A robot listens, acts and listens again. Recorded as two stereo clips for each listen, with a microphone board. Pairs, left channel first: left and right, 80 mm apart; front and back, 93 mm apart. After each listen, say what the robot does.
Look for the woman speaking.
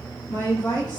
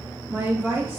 Turn 115° left.
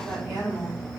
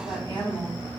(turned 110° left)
Turn 10° right.
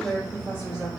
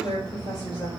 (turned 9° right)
Facing the woman speaking.